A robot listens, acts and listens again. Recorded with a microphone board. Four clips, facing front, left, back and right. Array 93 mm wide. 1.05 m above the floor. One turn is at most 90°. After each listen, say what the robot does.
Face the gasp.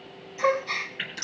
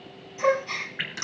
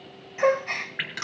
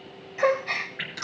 Turn 90° right.
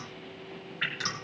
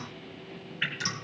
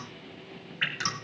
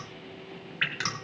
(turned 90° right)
Turn 45° right.
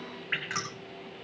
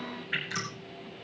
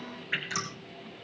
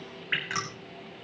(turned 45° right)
I heard a gasp from this way, but can't make it out now.